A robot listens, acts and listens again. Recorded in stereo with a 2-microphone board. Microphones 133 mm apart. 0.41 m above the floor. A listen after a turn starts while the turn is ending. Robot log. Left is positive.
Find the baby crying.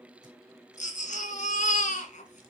note: The baby crying: about 60° left or 120° left.
cmd yaw +60
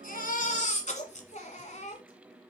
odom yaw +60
note: So it is at 60° left.
cmd yaw +60
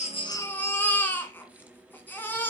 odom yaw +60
note: The baby crying is now 15° left.
cmd yaw +15
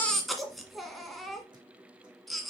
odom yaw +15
end: Facing the baby crying.